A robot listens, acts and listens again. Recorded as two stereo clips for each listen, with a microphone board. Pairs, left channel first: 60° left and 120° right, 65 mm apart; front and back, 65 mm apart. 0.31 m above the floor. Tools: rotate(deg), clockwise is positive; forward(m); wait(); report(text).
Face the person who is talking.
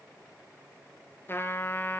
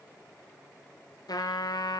wait()
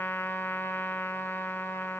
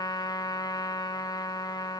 wait()
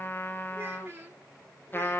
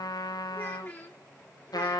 rotate(65)
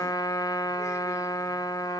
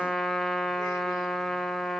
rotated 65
wait()
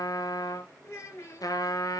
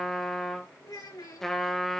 rotate(-15)
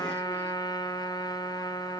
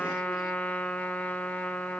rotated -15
wait()
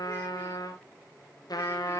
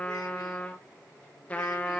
wait()
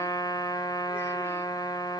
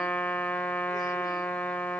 report("I heard a child speaking from this way, but can't make it out now.")